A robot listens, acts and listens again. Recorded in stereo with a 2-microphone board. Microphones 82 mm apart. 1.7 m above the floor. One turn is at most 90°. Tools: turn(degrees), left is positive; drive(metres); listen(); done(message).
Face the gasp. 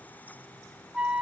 listen()
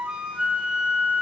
listen()
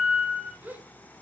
turn(degrees=-20)
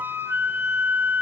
listen()
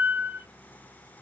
done("I heard a gasp, but can't make it out now. It was about straight ahead or 140° right.")